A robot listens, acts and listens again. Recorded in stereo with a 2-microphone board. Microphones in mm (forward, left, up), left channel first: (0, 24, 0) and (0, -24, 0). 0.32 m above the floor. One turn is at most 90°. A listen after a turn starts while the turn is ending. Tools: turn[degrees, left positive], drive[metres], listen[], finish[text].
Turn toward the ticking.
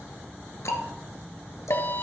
Action: turn[90]
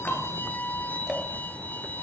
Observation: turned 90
Action: finish[Facing the ticking.]